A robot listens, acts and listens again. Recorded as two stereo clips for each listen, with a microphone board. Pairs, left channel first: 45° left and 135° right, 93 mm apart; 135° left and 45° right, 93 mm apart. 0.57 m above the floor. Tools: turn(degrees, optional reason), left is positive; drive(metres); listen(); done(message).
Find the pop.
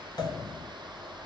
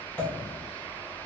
turn(degrees=70, reason="The pop: 70° left.")
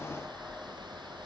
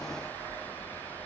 done("Facing where the pop came from. I can't hear it now.")